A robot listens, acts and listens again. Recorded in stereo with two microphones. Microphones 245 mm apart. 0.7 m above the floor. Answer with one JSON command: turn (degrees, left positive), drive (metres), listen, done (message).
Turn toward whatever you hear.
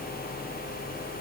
{"listen": true}
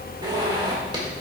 {"turn": -20}
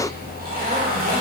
{"turn": -140}
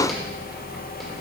{"listen": true}
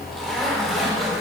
{"done": "Facing the zipper."}